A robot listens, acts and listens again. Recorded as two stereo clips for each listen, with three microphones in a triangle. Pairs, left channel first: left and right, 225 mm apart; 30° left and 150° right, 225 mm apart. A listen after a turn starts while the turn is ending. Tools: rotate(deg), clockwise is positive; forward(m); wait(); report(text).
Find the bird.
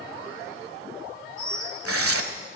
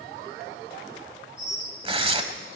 rotate(-70)
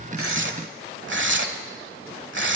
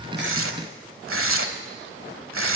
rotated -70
wait()
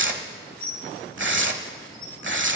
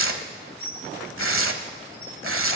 rotate(-25)
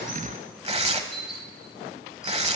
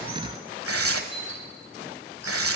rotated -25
report("Facing the bird.")